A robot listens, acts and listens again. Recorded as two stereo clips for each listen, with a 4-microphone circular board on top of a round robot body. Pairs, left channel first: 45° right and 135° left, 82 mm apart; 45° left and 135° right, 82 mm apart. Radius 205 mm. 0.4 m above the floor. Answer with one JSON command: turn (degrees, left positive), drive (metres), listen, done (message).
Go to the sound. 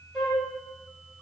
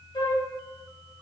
{"turn": 40}
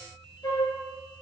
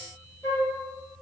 {"drive": 1.0}
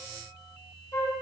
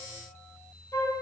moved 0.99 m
{"drive": 1.0}
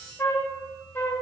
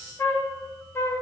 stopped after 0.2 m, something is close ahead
{"done": "Arrived at the flute, straight ahead."}